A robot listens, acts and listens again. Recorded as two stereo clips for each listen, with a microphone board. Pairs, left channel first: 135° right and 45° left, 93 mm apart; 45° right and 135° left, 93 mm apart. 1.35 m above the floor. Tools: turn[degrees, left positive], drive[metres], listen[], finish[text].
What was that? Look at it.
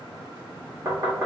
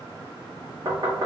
Thought: The knocking: 95° left.
Action: turn[95]
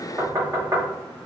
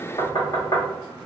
Thought: The knocking is now 10° right.
Action: turn[-10]
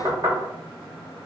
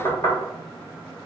Action: finish[Facing the knocking, 1 to 2 m away.]